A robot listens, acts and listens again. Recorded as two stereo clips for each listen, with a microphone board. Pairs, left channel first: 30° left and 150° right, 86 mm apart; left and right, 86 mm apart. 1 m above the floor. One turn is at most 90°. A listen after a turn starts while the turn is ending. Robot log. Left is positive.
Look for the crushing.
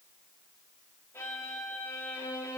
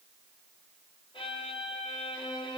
cmd idle
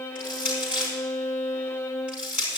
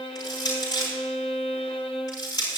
note: The crushing: 135° left.
cmd yaw +90
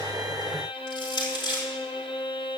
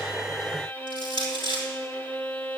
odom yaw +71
note: The crushing is now 65° left.
cmd yaw +65
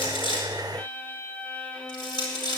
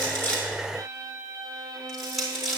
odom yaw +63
end: Found it: crushing, straight ahead.